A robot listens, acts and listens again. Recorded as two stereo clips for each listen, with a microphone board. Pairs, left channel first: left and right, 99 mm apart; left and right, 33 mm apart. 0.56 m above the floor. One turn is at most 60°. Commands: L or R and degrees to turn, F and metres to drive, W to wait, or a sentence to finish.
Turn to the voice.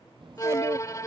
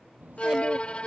R55
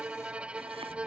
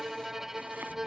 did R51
W
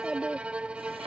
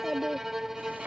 Facing the child speaking.